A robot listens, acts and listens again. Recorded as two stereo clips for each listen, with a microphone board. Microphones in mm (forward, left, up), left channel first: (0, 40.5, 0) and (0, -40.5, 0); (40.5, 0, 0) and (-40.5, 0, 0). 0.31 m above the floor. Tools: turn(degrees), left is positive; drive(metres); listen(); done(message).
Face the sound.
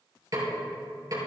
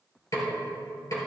turn(degrees=-50)
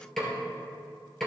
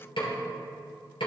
done("Found it: a snare drum, straight ahead.")